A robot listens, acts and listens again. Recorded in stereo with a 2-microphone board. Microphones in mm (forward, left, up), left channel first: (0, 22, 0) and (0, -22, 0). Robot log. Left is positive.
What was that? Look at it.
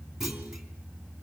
cmd yaw -30
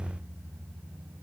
cmd idle
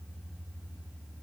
end: I heard a clunk, but can't make it out now. It was about 20° left or 140° right.